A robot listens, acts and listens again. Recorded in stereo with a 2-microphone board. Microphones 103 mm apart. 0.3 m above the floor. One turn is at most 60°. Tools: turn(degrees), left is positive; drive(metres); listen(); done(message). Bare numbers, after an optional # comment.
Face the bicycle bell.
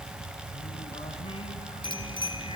# The bicycle bell: about 45° left or 135° left.
turn(45)
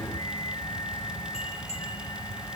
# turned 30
listen()
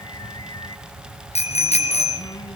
# So it is at 105° left.
turn(60)
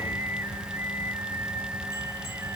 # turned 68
# Nothing new. It was at 35° left.
turn(35)
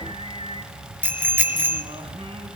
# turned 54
# The bicycle bell is now 20° right.
turn(-20)
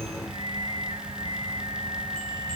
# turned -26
# Nothing new. It was at 10° left.
turn(10)
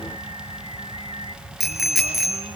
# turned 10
done("Found it: a bicycle bell, straight ahead, 2 to 4 m away.")